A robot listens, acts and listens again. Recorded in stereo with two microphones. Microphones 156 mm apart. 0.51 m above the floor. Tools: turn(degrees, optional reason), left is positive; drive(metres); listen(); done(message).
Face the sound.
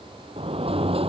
turn(degrees=-35, reason="The sliding door: about 35° right or 145° right.")
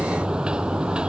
done("Facing the sliding door.")